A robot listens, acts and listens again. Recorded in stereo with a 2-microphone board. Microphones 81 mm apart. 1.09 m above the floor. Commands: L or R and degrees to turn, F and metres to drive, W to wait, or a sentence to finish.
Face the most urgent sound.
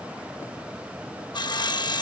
W
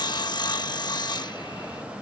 W
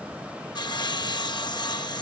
I can't make out anything urgent to turn to.